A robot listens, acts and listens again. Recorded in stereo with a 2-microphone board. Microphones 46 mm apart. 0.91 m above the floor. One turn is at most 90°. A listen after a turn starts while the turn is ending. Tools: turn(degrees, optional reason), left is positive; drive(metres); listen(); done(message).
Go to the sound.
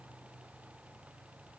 listen()
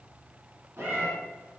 turn(degrees=-65, reason="The cat meowing: about 65° right or 115° right.")
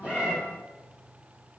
listen()
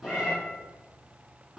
drive(metres=1.0)
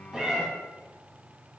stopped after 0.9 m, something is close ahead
turn(degrees=-15, reason="The cat meowing is now 15° right.")
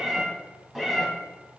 done("Arrived at the cat meowing, straight ahead.")